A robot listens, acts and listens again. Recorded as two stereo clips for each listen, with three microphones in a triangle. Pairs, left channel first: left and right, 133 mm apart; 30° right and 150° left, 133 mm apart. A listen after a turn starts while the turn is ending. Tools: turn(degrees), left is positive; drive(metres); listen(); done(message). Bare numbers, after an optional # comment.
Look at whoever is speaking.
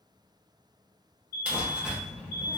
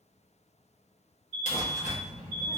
# The child speaking: 50° right.
turn(-50)
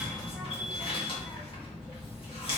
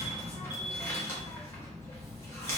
done("Facing the child speaking.")